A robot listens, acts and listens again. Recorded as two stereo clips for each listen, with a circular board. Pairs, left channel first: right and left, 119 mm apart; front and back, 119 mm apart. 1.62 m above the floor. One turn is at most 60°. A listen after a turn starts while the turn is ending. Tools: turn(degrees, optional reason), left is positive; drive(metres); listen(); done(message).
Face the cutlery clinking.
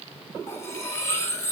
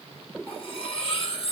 turn(degrees=-25, reason="The cutlery clinking: 25° right.")
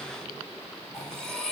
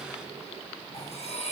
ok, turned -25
done("Facing the cutlery clinking.")